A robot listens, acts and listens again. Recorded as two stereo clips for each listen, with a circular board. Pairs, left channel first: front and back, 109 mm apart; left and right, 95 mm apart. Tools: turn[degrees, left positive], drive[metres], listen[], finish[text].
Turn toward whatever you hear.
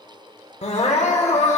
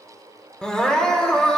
Thought: The crying: 10° left.
Action: turn[10]
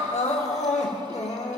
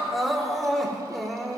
Action: finish[Found it: crying, straight ahead.]